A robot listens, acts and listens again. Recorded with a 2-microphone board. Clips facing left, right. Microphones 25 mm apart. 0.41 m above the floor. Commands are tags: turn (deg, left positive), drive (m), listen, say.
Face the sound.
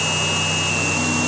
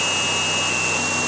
<listen/>
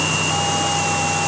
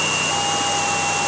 <listen/>
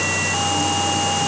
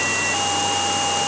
<say>I can't make out anything.</say>